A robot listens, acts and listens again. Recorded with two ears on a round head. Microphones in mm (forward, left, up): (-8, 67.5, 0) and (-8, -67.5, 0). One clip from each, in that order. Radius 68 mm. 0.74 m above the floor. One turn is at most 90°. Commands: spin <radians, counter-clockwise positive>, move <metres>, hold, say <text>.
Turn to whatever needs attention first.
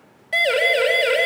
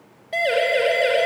spin 0.70
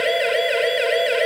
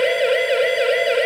say Found it: a siren, straight ahead.